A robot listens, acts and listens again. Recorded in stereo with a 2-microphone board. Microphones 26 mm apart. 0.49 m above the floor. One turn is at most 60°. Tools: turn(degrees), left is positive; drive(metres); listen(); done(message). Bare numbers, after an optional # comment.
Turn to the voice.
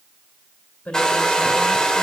# The woman speaking: about 70° left or 110° left.
turn(60)
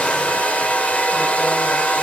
listen()
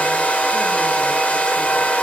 listen()
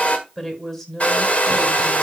# So it is at 20° left.
turn(20)
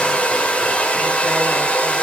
listen()
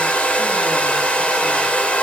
listen()
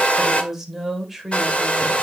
done("Found it: a woman speaking, straight ahead, 2 to 4 m away.")